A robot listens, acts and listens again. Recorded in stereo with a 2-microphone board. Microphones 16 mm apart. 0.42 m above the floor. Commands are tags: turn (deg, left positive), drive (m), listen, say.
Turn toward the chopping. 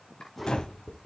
<turn deg="75"/>
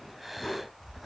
<listen/>
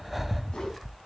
<listen/>
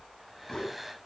<say>I heard chopping, but can't make it out now. It was about straight ahead or 30° left.</say>